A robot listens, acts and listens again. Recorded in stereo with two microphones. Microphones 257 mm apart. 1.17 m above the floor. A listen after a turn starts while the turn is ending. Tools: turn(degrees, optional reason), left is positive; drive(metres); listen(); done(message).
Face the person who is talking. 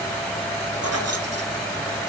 listen()
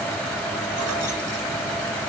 listen()
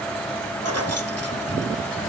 done("I can't make out anyone speaking.")